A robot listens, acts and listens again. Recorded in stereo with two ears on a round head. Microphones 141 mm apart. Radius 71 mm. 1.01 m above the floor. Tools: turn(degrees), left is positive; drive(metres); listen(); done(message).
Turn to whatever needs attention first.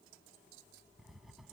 listen()
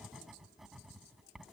listen()
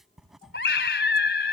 turn(degrees=90)
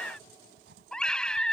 done("Facing the scream.")